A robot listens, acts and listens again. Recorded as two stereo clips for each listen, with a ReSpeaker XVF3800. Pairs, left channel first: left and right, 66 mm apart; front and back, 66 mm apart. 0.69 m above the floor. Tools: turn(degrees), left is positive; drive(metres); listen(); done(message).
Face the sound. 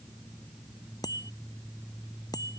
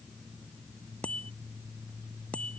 turn(degrees=70)
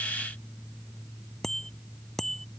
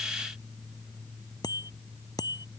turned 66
done("Found it: a bicycle bell, straight ahead.")